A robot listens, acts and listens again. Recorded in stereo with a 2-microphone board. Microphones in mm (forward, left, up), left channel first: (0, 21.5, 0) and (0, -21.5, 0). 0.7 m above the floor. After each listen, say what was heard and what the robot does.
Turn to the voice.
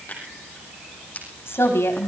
Turn 90° left.
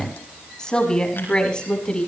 So it is at 25° left. Turn 25° left.
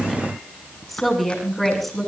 Found it: a woman speaking, straight ahead, over 4 m away.